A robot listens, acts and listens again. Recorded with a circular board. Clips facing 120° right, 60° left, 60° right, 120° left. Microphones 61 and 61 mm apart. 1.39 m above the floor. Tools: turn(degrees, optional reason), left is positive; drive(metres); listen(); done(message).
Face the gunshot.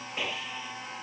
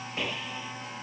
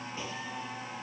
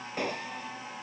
turn(degrees=150, reason="The gunshot: 150° left.")
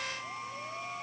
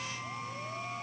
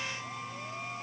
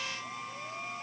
done("I heard a gunshot from this way, but can't make it out now.")